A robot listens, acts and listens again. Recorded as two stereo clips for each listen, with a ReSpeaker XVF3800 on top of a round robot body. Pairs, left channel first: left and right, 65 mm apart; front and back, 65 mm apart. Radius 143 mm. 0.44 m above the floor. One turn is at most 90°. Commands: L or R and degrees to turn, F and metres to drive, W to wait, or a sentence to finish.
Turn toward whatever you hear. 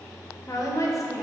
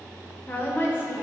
L55
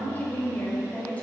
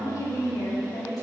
L20
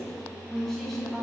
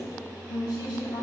Facing the woman speaking.